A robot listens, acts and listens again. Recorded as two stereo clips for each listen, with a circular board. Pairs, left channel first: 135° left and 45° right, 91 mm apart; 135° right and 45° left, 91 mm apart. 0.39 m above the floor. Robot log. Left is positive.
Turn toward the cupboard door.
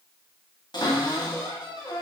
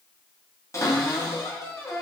note: The cupboard door: 175° left.
cmd yaw +175
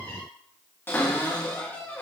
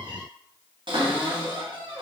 note: The cupboard door is now 70° left.
cmd yaw +70
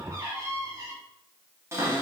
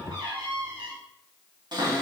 note: The cupboard door is now 15° left.
cmd yaw +15
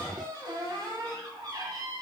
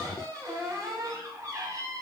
end: Found it: a cupboard door, straight ahead.